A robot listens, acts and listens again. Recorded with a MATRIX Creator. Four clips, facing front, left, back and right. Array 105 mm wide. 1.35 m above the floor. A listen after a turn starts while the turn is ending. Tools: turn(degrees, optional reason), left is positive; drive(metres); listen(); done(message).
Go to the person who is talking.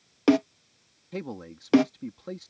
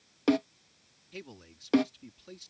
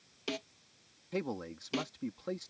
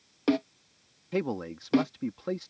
turn(degrees=-95, reason="The man speaking: 95° right.")
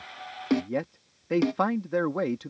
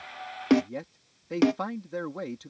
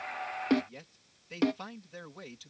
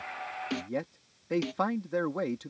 turn(degrees=-10, reason="The man speaking is now 10° right.")
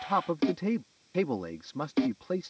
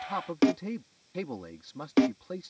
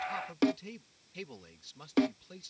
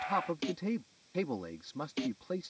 drive(metres=1.0)
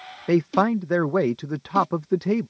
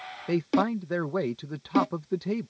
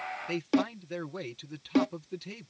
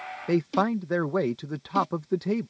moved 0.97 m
drive(metres=1.0)
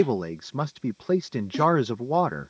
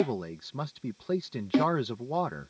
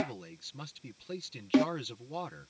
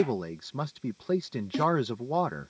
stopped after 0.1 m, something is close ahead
done("I am next to the man speaking.")